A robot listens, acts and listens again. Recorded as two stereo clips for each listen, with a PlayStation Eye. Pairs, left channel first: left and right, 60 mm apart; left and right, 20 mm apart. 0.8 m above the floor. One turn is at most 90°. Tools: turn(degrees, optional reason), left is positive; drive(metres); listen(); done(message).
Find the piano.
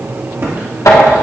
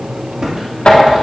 listen()
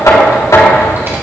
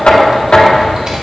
listen()
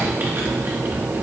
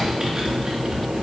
done("I can't make out a piano to turn to.")